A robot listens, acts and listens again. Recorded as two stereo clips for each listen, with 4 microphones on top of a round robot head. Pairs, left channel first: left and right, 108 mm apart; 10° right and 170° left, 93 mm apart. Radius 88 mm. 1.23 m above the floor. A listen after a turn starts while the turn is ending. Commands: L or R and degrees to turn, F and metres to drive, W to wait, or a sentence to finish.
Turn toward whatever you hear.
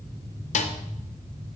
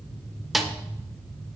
L80
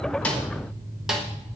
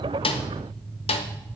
Facing the snare drum.